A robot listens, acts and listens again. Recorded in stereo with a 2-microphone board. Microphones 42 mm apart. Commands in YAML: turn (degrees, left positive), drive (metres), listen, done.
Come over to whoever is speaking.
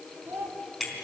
turn: -65
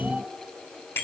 listen: true
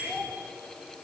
drive: 1.0
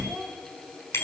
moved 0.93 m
drive: 1.0
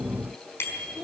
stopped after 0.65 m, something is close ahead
done: "Arrived at the child speaking, straight ahead."